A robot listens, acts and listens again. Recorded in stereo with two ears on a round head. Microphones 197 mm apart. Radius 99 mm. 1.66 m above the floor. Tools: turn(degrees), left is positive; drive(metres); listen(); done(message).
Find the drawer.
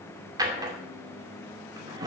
turn(degrees=-20)
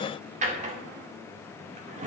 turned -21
turn(degrees=-135)
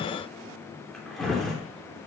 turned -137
done("Found it: a drawer, straight ahead.")